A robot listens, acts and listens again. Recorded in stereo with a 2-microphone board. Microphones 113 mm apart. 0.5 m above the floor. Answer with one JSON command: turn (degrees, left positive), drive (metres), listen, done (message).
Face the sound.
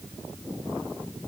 {"listen": true}
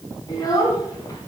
{"turn": 30}
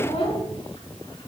{"turn": 125}
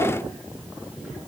{"listen": true}
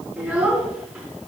{"turn": -10}
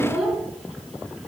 {"done": "Facing the child speaking."}